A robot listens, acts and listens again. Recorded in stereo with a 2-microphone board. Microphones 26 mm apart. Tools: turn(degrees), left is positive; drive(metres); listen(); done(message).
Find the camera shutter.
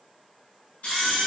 turn(degrees=55)
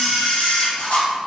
turn(degrees=65)
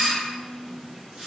turn(degrees=-25)
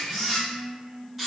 done("Facing the camera shutter, 1 to 2 m away.")